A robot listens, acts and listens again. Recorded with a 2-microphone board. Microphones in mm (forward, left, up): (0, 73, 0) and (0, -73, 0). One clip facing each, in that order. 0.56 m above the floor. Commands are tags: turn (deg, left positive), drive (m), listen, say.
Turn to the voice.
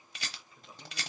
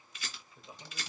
<turn deg="-30"/>
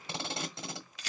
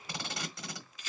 <listen/>
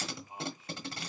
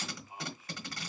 <turn deg="30"/>
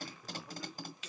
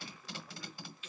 <turn deg="30"/>
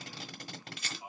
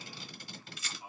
<turn deg="20"/>
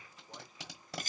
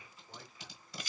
<listen/>
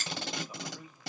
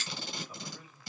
<turn deg="10"/>
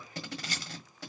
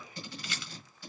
<listen/>
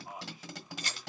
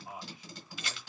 <say>Facing the man speaking, 2 to 4 m away.</say>